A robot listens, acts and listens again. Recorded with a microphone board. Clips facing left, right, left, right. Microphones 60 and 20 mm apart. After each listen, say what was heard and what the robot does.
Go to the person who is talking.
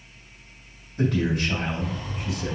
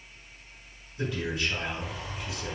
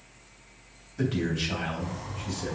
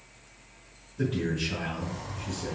The man speaking: about 65° left or 115° left. Turn 65° left.
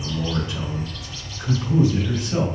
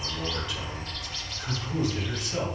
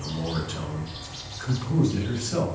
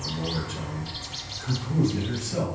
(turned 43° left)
So it is at 30° left. Turn 30° left.
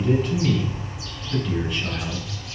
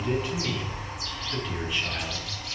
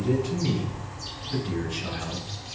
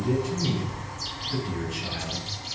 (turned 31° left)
Drive 1.0 m forward.
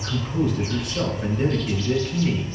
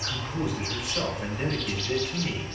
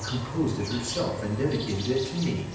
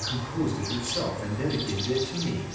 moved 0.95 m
The man speaking is now 10° right. Turn 10° right.
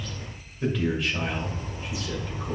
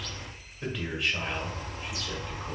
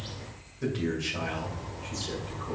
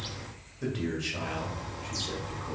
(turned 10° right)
Drive 1.0 m forward.
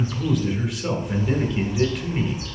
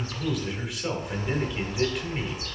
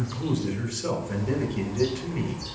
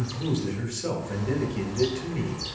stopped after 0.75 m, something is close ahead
Arrived at the man speaking, straight ahead.